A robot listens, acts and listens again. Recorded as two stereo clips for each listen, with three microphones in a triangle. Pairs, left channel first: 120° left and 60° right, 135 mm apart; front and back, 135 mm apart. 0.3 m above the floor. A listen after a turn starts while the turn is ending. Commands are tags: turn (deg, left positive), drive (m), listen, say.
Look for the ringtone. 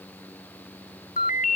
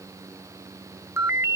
<turn deg="110"/>
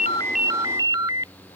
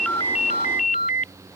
<say>Found it: a ringtone, straight ahead.</say>